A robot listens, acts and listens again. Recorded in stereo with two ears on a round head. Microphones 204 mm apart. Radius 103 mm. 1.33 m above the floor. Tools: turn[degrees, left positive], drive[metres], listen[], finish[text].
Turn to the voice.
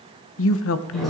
Thought: The woman speaking: about 60° left or 120° left.
Action: turn[60]
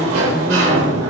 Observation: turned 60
Action: listen[]
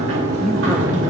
Action: listen[]
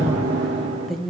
Action: finish[Facing the woman speaking, under 1 m away.]